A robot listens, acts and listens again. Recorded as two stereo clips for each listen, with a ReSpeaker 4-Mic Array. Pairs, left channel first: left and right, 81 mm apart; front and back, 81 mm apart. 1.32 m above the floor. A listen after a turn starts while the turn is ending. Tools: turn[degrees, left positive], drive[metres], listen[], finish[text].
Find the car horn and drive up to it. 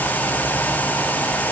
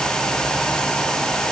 Action: listen[]
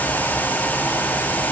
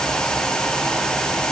Action: listen[]
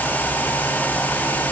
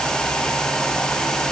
Action: finish[I can't make out a car horn.]